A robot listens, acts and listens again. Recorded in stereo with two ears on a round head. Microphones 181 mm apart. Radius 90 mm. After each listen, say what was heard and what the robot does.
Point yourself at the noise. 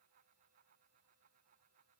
Keep listening.
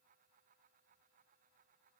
Keep listening.
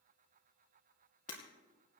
The breaking glass: about 40° left or 140° left. Turn 40° left.
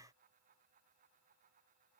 Keep listening.
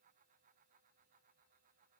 I heard breaking glass, but can't make it out now. It was about straight ahead or 100° left.